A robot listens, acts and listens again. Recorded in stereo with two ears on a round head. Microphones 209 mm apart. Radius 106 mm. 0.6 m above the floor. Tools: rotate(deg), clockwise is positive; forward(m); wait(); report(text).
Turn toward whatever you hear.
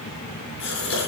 rotate(-55)
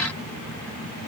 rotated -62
wait()
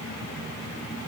report("I heard a gasp, but can't make it out now. It was about 5° right or 65° left.")